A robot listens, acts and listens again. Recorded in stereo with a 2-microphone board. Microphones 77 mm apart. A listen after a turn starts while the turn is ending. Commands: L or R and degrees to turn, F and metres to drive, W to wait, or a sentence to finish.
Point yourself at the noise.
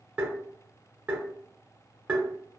R20
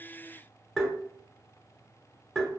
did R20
Found it: tapping, straight ahead.